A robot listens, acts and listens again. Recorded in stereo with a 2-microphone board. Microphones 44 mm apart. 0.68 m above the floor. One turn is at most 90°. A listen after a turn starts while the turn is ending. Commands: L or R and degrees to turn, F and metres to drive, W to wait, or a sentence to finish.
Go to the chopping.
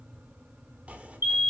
R35
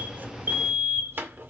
R90
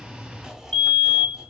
R10
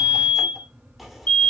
F1.0
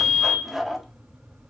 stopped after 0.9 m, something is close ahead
I am next to the chopping.